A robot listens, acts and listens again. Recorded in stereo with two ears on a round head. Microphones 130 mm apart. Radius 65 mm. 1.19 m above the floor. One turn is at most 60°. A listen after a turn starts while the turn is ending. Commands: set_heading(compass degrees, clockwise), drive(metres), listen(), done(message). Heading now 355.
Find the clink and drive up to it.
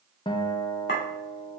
set_heading(295)
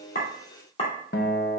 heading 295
set_heading(255)
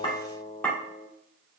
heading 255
set_heading(245)
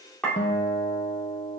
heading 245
set_heading(235)
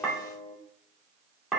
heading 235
drive(1.0)
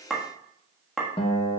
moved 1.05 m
drive(1.0)
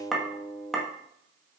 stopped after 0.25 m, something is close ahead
done("Arrived at the clink, straight ahead.")